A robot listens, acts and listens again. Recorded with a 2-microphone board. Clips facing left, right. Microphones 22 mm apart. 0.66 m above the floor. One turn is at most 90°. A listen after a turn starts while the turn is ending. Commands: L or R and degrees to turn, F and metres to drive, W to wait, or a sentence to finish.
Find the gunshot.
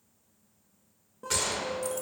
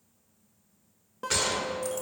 R30
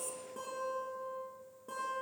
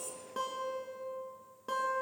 W
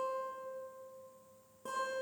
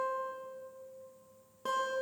I heard a gunshot, but can't make it out now. It was about 15° left or 135° right.